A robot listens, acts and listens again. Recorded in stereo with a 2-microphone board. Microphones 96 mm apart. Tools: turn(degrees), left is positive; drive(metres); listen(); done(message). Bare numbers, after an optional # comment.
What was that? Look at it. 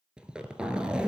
turn(-30)
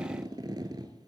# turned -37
# So it is at 130° right.
turn(-130)
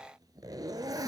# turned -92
# The zipper is now 40° right.
turn(-40)
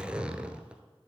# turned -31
# The zipper is now 10° right.
turn(-10)
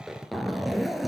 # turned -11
done("Found it: a zipper, straight ahead.")